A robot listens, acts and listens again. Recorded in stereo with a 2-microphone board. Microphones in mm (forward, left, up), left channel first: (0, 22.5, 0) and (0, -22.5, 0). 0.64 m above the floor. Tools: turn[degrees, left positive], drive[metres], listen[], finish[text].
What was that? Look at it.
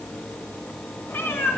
Thought: The cat meowing: about 55° left or 125° left.
Action: turn[55]
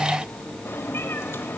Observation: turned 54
Thought: So it is at 70° left.
Action: turn[70]
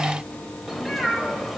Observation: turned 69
Action: finish[Facing the cat meowing.]